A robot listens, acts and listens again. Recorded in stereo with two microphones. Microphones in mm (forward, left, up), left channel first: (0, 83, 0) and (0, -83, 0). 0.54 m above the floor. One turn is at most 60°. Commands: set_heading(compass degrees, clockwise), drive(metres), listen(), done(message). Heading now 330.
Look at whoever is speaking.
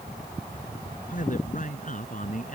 set_heading(280)
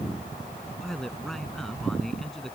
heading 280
done("Found it: a man speaking, straight ahead.")